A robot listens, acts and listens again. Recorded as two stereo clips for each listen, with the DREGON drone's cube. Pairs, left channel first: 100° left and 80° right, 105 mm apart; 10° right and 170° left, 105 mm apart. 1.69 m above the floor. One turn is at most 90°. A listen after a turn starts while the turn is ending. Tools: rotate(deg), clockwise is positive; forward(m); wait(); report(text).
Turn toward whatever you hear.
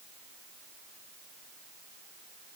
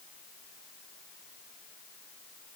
wait()
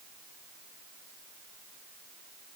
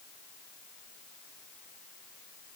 wait()
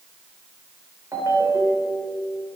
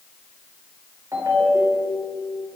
rotate(90)
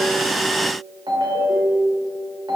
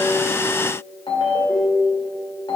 rotate(40)
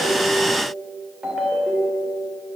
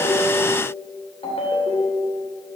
report("Facing the ringtone, 2 to 4 m away.")